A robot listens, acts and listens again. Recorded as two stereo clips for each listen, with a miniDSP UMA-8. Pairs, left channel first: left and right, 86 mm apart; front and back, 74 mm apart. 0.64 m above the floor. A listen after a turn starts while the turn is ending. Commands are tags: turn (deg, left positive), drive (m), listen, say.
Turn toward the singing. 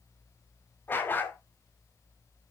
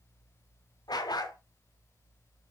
<listen/>
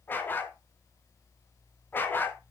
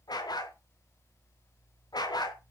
<listen/>
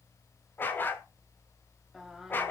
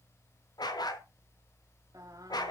<turn deg="-175"/>
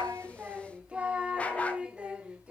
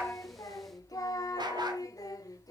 <turn deg="-15"/>
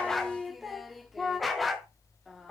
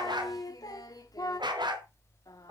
<say>Found it: singing, straight ahead, 1 to 2 m away.</say>